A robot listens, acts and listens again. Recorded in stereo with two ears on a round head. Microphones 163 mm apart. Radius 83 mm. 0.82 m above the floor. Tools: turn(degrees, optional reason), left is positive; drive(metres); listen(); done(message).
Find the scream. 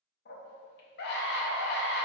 turn(degrees=60, reason="The scream: about 60° left or 120° left.")
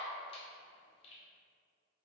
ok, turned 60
turn(degrees=35, reason="So it is at 35° left.")
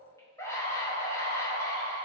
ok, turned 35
turn(degrees=15, reason="The scream is now 15° left.")
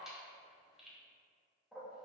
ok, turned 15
done("Facing the scream, under 1 m away.")